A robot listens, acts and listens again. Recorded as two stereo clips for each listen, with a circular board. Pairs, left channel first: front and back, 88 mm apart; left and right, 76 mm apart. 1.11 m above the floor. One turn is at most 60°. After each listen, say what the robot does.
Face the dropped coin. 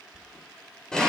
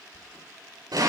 Turn 60° left.
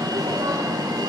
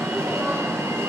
Turn 40° left.
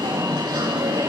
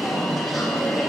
I heard a dropped coin from this way, but can't make it out now.